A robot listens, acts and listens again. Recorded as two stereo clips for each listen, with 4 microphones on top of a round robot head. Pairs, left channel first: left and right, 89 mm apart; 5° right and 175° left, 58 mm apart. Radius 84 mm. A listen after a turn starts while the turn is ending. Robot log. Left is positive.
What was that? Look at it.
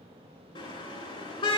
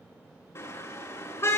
note: The car horn: 45° left.
cmd yaw +45
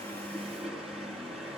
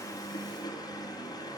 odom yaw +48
end: Found it: a car horn, straight ahead.